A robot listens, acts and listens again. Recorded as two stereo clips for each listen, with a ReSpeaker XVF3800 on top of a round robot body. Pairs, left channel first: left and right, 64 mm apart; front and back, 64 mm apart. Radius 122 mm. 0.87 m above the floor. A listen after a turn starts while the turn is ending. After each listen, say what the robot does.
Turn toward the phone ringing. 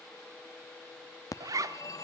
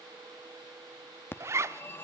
Turn 55° left.
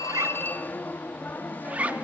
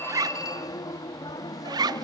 Turn 25° left.
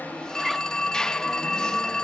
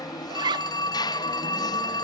Turn 10° left.
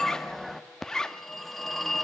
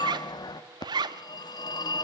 Found it: a phone ringing, straight ahead.